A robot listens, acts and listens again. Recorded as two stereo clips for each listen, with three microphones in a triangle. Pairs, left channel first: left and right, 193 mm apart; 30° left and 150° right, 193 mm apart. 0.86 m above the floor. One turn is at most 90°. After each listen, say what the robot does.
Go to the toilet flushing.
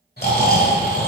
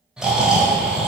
Keep listening.
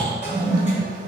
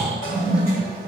Turn 35° left.
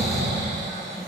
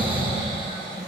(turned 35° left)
Keep listening.
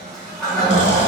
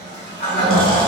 Drive 1.0 m forward.
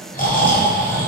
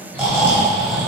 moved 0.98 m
Keep listening.
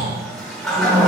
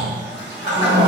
Drive 1.0 m forward.
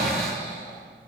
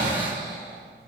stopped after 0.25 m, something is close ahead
Keep listening.
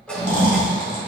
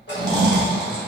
I am next to the toilet flushing.